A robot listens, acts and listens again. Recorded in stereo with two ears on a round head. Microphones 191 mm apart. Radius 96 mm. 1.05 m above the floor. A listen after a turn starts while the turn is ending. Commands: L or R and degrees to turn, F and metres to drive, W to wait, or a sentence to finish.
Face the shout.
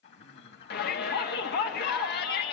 L50
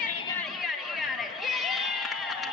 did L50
Found it: a shout, straight ahead.